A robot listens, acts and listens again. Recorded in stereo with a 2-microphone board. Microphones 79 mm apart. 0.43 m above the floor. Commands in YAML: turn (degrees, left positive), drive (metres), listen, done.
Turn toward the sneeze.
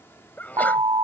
turn: 20
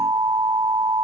listen: true
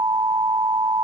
done: "I heard a sneeze, but can't make it out now. It was about straight ahead or 140° left."